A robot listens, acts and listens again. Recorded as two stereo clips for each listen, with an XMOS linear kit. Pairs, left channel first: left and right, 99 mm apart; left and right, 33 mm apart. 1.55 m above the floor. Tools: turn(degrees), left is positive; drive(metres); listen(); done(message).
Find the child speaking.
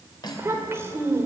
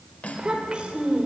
turn(degrees=-25)
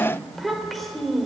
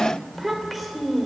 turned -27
done("Facing the child speaking.")